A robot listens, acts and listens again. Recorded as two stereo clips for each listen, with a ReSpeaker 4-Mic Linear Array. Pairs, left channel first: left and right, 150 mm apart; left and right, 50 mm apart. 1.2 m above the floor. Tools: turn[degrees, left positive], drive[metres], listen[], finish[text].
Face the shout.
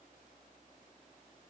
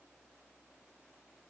Action: listen[]
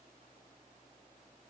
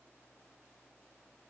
Action: listen[]
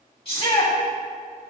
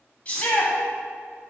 Thought: The shout: about 35° left or 145° left.
Action: turn[35]
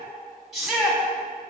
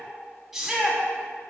Action: finish[Facing the shout, 2 to 4 m away.]